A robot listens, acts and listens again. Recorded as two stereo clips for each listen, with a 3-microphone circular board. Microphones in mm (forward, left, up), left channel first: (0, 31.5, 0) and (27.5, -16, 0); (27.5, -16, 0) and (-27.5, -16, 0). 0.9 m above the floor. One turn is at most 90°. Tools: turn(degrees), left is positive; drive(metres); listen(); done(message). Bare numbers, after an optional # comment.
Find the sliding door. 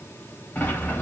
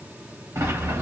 # The sliding door: 175° left.
turn(90)
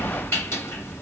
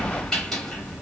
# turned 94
# The sliding door is now 80° left.
turn(80)
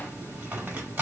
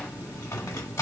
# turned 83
done("Facing the sliding door, under 1 m away.")